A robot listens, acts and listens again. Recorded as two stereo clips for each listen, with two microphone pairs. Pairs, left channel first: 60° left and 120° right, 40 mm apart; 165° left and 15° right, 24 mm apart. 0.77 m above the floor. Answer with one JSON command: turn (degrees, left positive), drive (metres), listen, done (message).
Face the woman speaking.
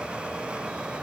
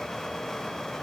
{"listen": true}
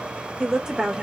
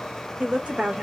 {"turn": -45}
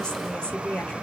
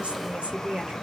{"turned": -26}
{"turn": 10}
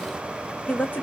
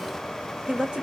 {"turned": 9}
{"turn": 25}
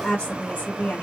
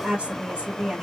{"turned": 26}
{"turn": 20}
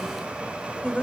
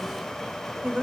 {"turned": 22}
{"turn": 10}
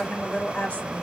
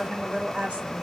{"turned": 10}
{"done": "Found it: a woman speaking, straight ahead, 1 to 2 m away."}